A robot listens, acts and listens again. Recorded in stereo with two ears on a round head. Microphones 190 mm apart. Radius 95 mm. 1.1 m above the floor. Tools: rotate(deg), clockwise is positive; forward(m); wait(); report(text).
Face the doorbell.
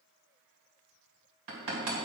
wait()
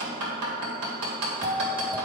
rotate(15)
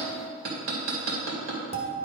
rotate(155)
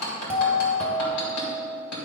report("Facing the doorbell, 1 to 2 m away.")